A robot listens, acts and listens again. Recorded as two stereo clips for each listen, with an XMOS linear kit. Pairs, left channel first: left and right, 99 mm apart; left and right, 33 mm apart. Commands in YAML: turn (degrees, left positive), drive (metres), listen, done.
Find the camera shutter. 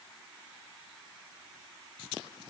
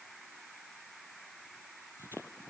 listen: true
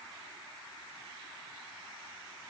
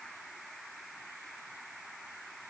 listen: true
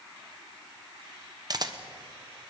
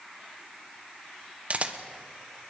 turn: -40
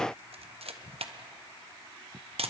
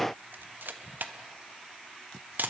turn: -100
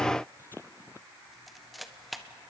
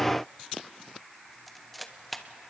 done: "Facing the camera shutter, 1 to 2 m away."